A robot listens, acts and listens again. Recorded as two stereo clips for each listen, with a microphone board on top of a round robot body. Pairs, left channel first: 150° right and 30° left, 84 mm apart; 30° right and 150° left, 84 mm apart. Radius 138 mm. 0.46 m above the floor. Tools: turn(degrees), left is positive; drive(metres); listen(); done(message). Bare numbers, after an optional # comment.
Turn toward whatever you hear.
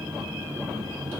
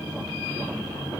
listen()
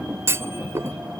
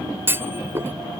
# The clunk: 85° left.
turn(85)
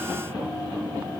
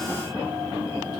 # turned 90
done("Facing where the clunk came from. I can't hear it now.")